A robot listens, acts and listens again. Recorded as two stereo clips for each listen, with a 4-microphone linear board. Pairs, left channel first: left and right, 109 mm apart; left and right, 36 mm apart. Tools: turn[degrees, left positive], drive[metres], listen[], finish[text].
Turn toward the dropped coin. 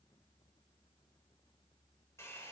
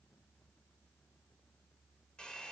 Action: listen[]
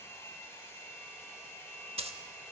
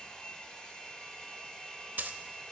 Thought: The dropped coin: about 65° right or 115° right.
Action: turn[-65]
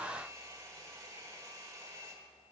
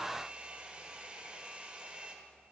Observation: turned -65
Action: listen[]
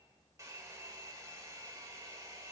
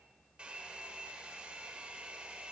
Action: finish[I heard a dropped coin, but can't make it out now. It was about straight ahead or 50° right.]